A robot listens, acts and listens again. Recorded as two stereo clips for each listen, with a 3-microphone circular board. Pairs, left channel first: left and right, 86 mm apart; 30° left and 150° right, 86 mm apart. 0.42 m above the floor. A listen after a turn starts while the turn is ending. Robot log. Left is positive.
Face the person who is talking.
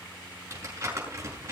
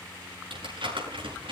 cmd idle
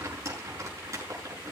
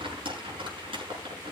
cmd idle
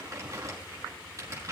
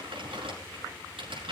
end: I can't make out anyone speaking to turn to.